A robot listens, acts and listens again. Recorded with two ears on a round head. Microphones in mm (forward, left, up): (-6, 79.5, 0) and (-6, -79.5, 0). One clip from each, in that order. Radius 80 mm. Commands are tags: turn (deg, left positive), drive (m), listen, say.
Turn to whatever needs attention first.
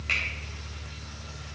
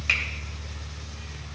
<listen/>
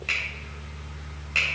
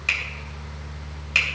<listen/>
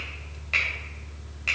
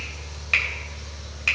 <say>I can't make out anything urgent, only a finger snap.</say>